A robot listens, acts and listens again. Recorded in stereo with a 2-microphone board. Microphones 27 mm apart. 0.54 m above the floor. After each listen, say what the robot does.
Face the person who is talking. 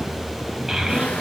Turn 20° right.
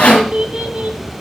Turn 140° right.
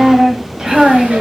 Turn 30° right.
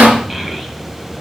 Turn 10° right.
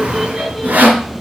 Keep listening.
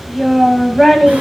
Found it: a child speaking, straight ahead.